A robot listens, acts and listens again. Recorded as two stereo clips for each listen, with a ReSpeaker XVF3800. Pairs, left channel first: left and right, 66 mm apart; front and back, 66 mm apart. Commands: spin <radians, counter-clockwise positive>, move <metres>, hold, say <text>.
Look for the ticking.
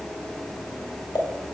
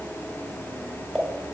spin 1.48
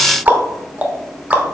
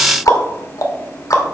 spin -0.44
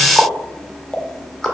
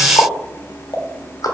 say Facing the ticking.